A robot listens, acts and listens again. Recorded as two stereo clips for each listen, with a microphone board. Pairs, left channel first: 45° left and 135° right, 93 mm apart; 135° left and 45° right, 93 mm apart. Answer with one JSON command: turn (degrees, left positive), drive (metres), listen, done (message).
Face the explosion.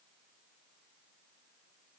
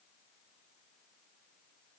{"listen": true}
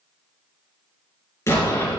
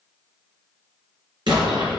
{"turn": -15}
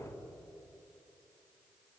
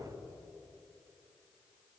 {"done": "Facing where the explosion came from. I can't hear it now."}